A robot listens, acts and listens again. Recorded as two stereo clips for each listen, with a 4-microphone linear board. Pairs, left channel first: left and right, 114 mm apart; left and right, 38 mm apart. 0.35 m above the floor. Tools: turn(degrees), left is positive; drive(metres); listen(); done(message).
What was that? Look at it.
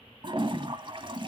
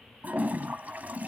turn(degrees=-45)
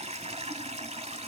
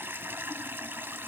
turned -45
turn(degrees=-85)
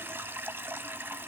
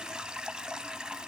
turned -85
turn(degrees=-20)
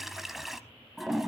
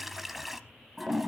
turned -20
done("Found it: a toilet flushing, straight ahead, 1 to 2 m away.")